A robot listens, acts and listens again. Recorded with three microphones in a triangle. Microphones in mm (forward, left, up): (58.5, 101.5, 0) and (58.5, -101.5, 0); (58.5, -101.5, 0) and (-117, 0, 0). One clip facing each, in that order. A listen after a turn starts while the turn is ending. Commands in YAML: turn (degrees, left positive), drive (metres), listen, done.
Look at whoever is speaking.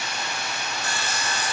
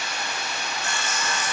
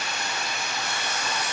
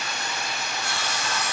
listen: true
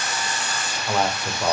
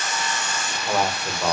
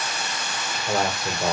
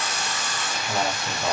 done: "Found it: a man speaking, straight ahead."